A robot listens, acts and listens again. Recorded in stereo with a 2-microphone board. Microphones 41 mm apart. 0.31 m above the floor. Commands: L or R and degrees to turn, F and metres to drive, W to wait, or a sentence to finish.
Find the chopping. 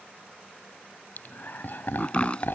L25
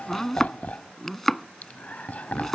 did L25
Found it: chopping, straight ahead.